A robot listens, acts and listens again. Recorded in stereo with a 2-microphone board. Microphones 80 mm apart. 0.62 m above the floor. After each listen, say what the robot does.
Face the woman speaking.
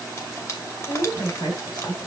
Turn 65° left.
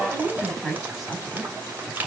Facing the woman speaking, over 4 m away.